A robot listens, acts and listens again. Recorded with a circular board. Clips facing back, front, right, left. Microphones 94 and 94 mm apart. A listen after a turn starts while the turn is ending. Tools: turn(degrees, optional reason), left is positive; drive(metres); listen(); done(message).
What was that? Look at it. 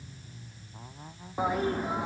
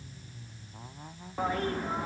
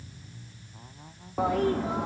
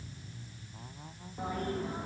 turn(degrees=-100, reason="The toilet flushing: 100° right.")
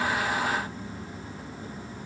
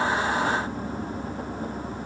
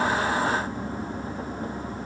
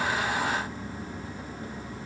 turn(degrees=-40, reason="The toilet flushing is now 40° right.")
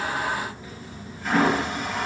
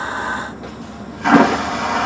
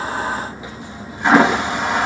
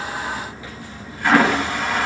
turn(degrees=-20, reason="The toilet flushing is now 20° right.")
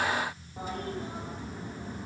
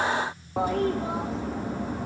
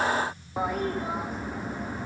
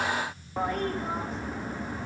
done("Found it: a toilet flushing, straight ahead.")